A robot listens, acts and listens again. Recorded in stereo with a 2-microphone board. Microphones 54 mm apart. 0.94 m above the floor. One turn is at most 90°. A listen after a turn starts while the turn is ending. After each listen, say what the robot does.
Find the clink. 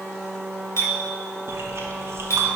Turn 65° left.
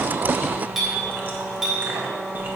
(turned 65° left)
Facing the clink.